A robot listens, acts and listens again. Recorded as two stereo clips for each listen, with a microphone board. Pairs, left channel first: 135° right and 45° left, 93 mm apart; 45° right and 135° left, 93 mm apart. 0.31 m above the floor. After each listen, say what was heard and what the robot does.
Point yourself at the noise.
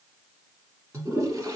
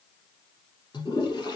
The toilet flushing: 10° right. Turn 10° right.
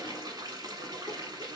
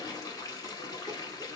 Facing the toilet flushing.